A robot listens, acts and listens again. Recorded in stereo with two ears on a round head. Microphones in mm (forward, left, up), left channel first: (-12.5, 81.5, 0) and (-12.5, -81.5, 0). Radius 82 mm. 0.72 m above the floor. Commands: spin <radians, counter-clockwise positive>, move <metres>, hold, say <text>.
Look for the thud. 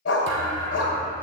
spin -1.13
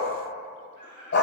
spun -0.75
hold
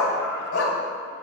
say I heard a thud, but can't make it out now. It was about 20° right or 70° right.